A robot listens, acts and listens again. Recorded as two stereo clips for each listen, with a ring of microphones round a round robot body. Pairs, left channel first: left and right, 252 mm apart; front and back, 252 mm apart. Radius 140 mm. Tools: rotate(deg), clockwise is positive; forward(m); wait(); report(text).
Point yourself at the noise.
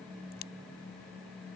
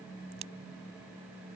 rotate(-150)
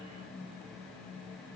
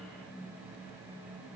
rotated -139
rotate(-10)
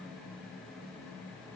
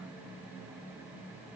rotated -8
report("I heard a crack from this way, but can't make it out now.")